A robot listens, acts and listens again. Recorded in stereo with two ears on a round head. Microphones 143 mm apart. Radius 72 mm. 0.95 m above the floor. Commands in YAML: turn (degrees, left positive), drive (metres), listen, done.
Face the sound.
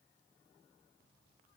listen: true
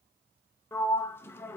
turn: 15
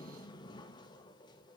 turn: 150
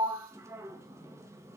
turn: -20
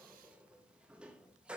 turn: -10
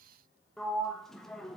done: "Facing the sliding door."